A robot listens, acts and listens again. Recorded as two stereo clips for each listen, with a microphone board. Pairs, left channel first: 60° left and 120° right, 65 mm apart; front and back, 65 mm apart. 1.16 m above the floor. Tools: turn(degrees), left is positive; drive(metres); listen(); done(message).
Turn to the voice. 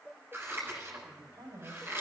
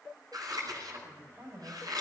turn(degrees=-135)
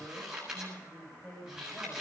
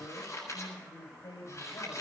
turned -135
done("Found it: a man speaking, straight ahead, over 4 m away.")